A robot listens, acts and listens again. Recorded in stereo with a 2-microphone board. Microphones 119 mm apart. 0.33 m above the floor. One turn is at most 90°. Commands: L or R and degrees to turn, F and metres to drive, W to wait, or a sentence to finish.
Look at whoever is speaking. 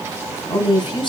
L40
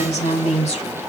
L90
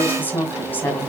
L15
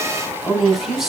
Facing the woman speaking.